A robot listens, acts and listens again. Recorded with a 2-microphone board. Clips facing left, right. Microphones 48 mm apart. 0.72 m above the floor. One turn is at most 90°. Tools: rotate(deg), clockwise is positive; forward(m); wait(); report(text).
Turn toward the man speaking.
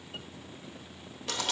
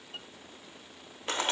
wait()
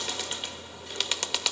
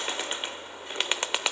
wait()
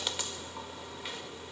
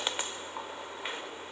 report("I can't make out a man speaking, only a bird.")